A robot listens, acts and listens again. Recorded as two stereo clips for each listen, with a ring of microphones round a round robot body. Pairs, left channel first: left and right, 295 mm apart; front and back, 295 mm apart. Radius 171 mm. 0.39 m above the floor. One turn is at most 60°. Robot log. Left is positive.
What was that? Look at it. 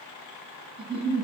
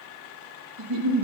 note: The giggle: 165° right.
cmd yaw -60
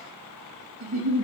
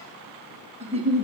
note: The giggle is now 110° right.
cmd yaw -60
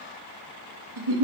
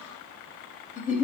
note: The giggle is now 65° right.
cmd yaw -60
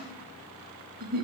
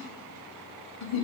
note: The giggle is now 30° right.
cmd yaw -30
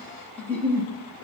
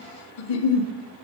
end: Found it: a giggle, straight ahead, under 1 m away.